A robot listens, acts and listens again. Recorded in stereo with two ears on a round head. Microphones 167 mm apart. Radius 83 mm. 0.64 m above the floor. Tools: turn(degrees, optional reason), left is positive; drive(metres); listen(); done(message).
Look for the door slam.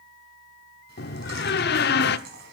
turn(degrees=60, reason="The door slam: about 60° left or 120° left.")
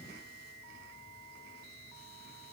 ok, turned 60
listen()
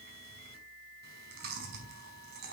done("I heard a door slam, but can't make it out now. It was about straight ahead or 60° left.")